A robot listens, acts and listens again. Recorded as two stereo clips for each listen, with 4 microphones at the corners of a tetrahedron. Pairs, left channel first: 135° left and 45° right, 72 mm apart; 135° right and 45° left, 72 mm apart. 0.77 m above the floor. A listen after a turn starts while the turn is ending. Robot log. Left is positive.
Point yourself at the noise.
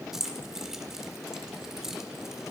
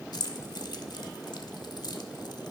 note: The keys jangling: 130° right.
cmd yaw -130
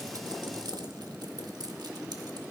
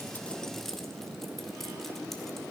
cmd idle
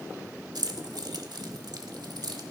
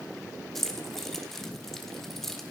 note: The keys jangling is now 50° right.
cmd yaw -50
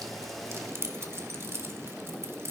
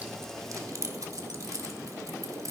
end: Found it: keys jangling, straight ahead, 1 to 2 m away.